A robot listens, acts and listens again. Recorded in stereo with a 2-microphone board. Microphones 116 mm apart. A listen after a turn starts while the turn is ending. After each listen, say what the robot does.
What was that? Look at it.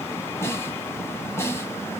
Turn 20° left.
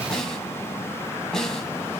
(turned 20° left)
Facing the snare drum, 1 to 2 m away.